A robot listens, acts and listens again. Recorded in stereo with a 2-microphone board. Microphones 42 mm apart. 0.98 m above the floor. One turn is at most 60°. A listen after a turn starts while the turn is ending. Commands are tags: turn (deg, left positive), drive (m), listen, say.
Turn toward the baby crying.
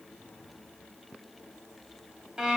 <listen/>
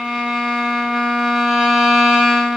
<listen/>
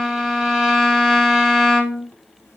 <say>I can't make out a baby crying, only a violin.</say>